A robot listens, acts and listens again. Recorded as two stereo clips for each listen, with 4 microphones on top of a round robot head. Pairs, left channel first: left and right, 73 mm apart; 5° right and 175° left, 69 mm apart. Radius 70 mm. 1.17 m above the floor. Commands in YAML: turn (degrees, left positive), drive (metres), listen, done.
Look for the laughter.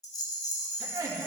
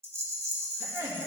turn: -135
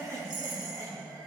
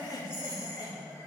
turn: -45
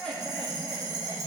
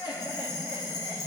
done: "Found it: laughter, straight ahead."